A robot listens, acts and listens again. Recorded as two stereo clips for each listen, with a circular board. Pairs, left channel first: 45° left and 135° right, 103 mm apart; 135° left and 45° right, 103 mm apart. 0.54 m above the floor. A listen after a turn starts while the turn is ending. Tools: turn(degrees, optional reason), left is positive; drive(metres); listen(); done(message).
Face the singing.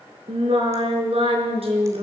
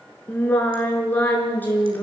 turn(degrees=-155, reason="The singing: 155° right.")
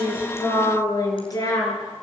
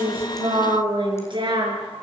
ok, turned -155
turn(degrees=-10, reason="The singing is now 10° right.")
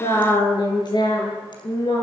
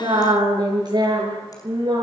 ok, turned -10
done("Found it: singing, straight ahead, over 4 m away.")